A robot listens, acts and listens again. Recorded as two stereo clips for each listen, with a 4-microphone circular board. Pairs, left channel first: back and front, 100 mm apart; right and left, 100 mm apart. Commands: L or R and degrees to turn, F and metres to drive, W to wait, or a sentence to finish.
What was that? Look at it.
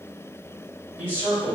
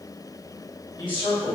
R65
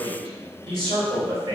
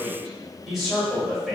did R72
Found it: a man speaking, straight ahead.